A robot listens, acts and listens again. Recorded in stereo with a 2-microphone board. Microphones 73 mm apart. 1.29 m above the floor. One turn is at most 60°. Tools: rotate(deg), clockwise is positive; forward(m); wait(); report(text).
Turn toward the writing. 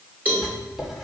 rotate(30)
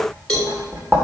rotate(60)
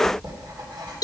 rotate(60)
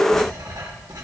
rotate(20)
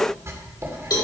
rotate(40)
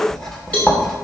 report("Facing the writing.")